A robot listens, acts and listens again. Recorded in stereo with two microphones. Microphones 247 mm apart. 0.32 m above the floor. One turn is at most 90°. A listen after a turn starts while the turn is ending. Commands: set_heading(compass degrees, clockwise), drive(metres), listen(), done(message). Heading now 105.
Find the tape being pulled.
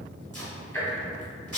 set_heading(175)
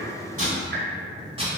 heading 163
set_heading(188)
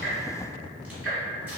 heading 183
listen()
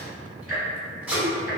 done("Facing the tape being pulled.")